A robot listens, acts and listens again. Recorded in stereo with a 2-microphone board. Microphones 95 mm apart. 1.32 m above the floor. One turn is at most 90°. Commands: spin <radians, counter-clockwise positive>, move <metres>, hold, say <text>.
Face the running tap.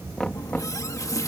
spin 0.61
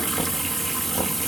say Found it: a running tap, straight ahead.